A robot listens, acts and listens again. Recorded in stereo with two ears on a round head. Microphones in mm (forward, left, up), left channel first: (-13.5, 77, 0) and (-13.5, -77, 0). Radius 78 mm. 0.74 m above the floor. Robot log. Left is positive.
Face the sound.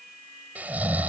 cmd yaw -30
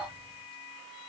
cmd idle
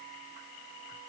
cmd idle
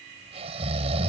note: So it is at 140° right.
cmd yaw -140
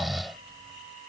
end: Found it: snoring, straight ahead.